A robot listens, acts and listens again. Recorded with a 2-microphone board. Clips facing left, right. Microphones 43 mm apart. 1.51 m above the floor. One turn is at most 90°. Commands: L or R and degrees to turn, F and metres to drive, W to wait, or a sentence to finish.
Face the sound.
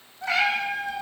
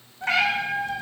R45
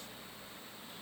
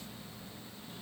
W
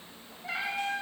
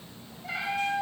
L10
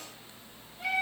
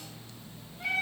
Found it: a cat meowing, straight ahead, over 4 m away.